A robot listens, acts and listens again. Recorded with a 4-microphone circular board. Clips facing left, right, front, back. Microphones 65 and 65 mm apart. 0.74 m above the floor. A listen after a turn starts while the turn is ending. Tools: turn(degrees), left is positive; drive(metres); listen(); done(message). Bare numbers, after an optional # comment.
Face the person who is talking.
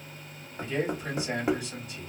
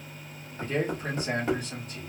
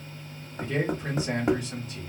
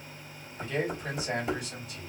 # The man speaking: 50° right.
turn(-50)
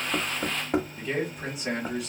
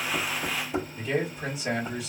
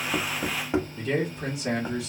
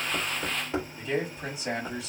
done("Found it: a man speaking, straight ahead.")